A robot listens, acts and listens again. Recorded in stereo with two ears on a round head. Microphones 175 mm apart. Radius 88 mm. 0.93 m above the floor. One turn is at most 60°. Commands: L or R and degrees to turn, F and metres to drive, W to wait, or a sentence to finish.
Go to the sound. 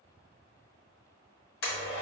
L60
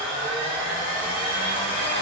L20
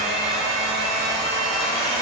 F1.0
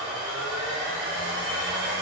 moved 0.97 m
F1.0
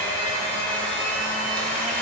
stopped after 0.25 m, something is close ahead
I am next to the blender.